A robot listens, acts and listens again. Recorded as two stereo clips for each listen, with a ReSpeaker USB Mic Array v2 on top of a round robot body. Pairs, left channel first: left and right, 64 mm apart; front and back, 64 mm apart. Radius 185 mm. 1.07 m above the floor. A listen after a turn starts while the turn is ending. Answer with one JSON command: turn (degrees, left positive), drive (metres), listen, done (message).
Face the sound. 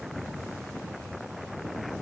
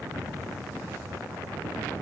{"listen": true}
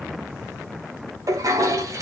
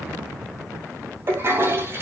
{"turn": -125}
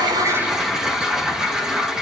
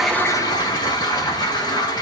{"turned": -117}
{"turn": -10}
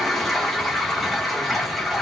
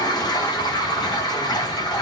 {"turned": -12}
{"done": "Found it: a toilet flushing, straight ahead."}